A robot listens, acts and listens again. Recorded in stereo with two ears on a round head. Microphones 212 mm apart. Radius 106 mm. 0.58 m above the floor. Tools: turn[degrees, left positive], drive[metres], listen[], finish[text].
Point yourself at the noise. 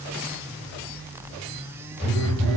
Action: turn[30]
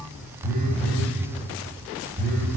Thought: So it is at 35° right.
Action: turn[-35]
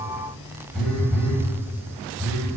Action: finish[Found it: a phone buzzing, straight ahead, 1 to 2 m away.]